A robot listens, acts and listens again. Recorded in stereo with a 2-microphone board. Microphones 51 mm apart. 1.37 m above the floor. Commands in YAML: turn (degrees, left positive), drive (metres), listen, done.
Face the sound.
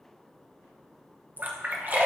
turn: -40
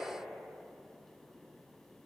listen: true
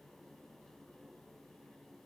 done: "I heard a splash, but can't make it out now. It was about straight ahead or 100° right."